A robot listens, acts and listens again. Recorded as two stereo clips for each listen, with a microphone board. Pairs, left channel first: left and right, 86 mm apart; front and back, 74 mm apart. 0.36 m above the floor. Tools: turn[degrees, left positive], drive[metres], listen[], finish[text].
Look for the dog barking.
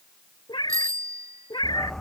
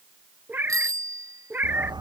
Thought: The dog barking: 175° left.
Action: turn[175]
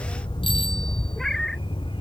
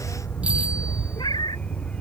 Thought: The dog barking is now 75° left.
Action: turn[75]
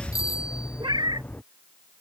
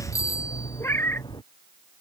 Thought: The dog barking is now 20° left.
Action: turn[20]
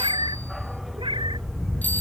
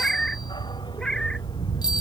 Action: finish[Found it: a dog barking, straight ahead.]